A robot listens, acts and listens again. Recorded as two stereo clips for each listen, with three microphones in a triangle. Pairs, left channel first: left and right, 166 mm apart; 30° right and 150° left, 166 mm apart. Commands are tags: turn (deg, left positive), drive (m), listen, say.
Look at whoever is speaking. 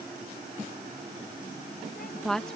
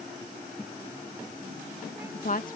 <say>Found it: a woman speaking, straight ahead.</say>